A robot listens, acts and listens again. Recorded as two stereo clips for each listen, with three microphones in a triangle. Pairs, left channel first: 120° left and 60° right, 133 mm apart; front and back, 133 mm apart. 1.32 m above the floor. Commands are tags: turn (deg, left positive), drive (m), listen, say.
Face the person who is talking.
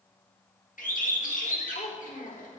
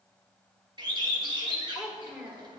<turn deg="100"/>
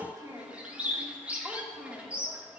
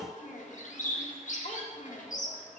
<turn deg="25"/>
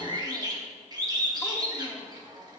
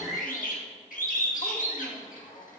<listen/>
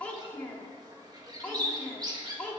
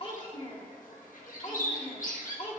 <turn deg="40"/>
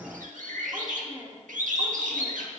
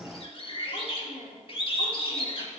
<say>Found it: a child speaking, straight ahead.</say>